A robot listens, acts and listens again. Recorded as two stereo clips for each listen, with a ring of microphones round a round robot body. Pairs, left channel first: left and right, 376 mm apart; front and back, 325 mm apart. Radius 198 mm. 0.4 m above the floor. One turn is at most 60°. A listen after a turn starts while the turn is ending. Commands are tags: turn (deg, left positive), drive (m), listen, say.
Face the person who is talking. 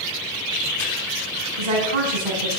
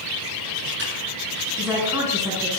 <turn deg="-60"/>
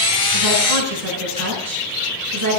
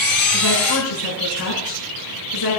<turn deg="-40"/>
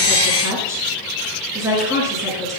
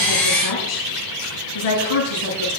<turn deg="-10"/>
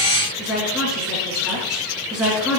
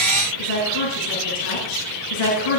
<say>Found it: a woman speaking, straight ahead, over 4 m away.</say>